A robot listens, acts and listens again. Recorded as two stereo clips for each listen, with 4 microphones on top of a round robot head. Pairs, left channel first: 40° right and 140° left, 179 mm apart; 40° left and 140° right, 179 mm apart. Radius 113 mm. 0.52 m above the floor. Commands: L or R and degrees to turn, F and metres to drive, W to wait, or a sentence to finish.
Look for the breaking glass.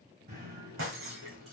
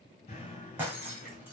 L140
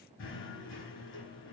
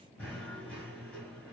I heard breaking glass from this way, but can't make it out now.